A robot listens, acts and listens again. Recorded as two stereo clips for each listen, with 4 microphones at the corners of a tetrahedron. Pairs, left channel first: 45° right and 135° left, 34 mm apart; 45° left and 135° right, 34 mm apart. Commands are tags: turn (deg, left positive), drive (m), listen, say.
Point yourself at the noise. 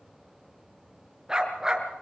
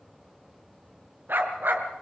<turn deg="-155"/>
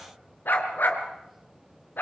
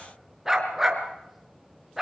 <turn deg="-60"/>
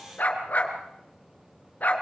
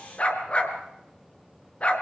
<turn deg="-10"/>
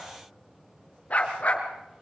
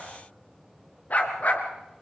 <say>Facing the dog barking, over 4 m away.</say>